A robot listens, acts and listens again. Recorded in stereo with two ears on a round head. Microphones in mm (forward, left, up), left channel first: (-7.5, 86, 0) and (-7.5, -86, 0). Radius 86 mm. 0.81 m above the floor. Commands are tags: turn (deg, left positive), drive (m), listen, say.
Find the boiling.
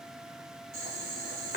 <turn deg="-45"/>
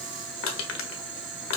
<turn deg="-90"/>
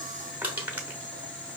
<turn deg="10"/>
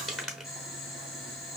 <say>Found it: boiling, straight ahead, 2 to 4 m away.</say>